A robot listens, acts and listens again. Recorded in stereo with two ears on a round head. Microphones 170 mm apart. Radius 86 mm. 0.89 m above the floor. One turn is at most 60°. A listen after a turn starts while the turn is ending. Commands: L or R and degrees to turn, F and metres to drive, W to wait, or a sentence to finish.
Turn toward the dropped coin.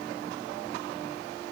W
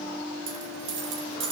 R60
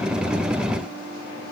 W
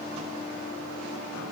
I heard a dropped coin, but can't make it out now. It was about 5° right or 55° right.